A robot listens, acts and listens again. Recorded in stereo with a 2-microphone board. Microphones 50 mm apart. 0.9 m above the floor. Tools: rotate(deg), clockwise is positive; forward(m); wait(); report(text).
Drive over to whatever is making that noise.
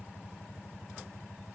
wait()
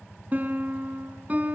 rotate(30)
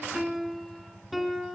forward(1.0)
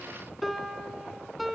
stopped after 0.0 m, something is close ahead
report("Something is in my way. I am facing the piano but have not reached it.")